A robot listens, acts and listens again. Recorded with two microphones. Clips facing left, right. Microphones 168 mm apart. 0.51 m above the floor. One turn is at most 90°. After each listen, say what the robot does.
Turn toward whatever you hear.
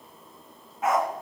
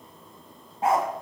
Turn 30° right.
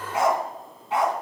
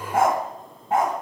Turn 90° right.
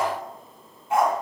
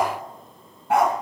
Turn 70° right.
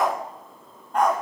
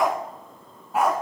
Turn 10° right.
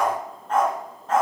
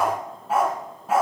Turn 10° right.
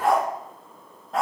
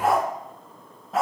Facing the dog barking.